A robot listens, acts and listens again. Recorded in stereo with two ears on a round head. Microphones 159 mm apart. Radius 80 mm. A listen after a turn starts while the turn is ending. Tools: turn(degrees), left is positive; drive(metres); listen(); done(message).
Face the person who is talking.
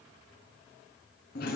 listen()
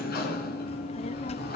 turn(degrees=35)
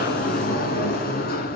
listen()
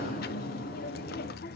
turn(degrees=105)
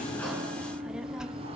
done("Facing the child speaking, under 1 m away.")